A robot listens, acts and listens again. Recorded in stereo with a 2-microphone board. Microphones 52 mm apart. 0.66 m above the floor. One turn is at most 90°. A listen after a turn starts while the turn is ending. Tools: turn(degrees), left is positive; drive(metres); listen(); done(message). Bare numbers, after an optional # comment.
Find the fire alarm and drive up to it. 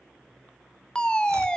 turn(30)
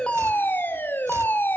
# So it is at 135° left.
turn(90)
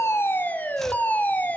# The fire alarm is now 45° left.
turn(45)
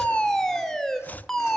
# The fire alarm is now 15° left.
turn(15)
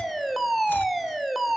drive(1.0)
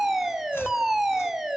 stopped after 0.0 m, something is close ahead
done("Blocked. The fire alarm is further on, straight ahead.")